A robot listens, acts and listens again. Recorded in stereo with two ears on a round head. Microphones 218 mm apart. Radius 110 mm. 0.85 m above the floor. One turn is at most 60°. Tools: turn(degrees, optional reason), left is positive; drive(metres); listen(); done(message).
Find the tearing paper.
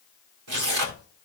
turn(degrees=-60, reason="The tearing paper: about 70° right or 110° right.")
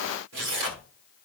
turn(degrees=-50, reason="So it is at 50° right.")
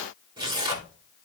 turn(degrees=-20, reason="The tearing paper is now 20° right.")
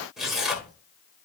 done("Facing the tearing paper.")